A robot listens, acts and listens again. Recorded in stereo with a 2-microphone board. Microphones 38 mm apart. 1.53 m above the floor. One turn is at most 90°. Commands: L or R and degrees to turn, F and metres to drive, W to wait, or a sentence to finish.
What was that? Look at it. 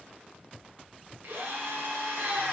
R90
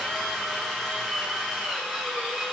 Found it: a drill, straight ahead, 2 to 4 m away.